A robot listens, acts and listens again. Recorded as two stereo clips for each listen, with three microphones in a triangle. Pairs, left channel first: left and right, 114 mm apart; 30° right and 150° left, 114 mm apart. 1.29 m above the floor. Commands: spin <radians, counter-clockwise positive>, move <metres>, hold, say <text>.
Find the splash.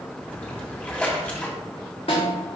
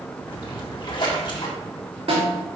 spin 0.26
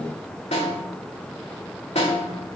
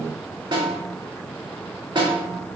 say I heard a splash from this way, but can't make it out now.